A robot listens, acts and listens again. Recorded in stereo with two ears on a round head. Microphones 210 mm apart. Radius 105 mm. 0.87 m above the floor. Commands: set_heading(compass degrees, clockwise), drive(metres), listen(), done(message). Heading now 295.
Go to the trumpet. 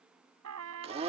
set_heading(25)
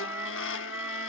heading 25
set_heading(35)
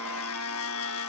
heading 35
listen()
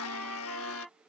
drive(1.0)
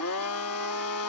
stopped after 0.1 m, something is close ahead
listen()
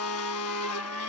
listen()
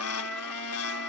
done("I heard a trumpet from this way, but can't make it out now. I did not reach it.")